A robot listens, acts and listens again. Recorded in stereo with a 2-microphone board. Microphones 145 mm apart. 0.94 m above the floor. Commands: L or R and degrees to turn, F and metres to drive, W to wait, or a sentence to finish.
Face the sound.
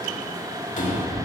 L60
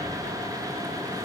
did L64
W
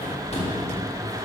L50
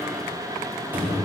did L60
R15
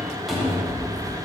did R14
Facing the cupboard door.